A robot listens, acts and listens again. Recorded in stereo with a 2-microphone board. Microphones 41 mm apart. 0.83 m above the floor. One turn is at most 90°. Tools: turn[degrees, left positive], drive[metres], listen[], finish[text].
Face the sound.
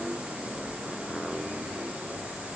Action: listen[]
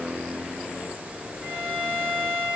Thought: The violin: about 45° right or 135° right.
Action: turn[-45]
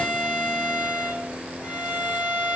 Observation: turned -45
Action: finish[Found it: a violin, straight ahead, over 4 m away.]